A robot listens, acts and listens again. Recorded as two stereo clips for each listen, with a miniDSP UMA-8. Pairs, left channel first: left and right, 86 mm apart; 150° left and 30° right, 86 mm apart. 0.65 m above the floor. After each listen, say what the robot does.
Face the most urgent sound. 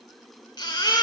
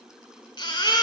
Turn 125° left.
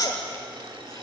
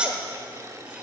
Turn 50° left.
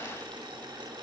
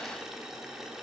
Keep listening.
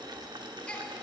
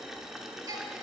Turn 15° left.
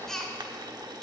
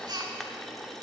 Found it: a baby crying, straight ahead, 1 to 2 m away.